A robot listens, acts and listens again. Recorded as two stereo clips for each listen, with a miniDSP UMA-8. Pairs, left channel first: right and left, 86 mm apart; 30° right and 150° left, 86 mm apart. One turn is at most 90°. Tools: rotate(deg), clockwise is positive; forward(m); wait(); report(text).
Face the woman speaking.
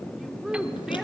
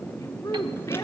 report("Facing the woman speaking, 2 to 4 m away.")